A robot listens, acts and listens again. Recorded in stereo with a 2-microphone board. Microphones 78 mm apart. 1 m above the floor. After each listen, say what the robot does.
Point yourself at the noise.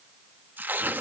Turn 25° right.
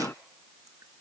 Keep listening.
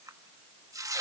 Turn 130° right.
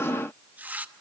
Turn 20° right.
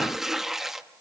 Found it: tearing paper, straight ahead, under 1 m away.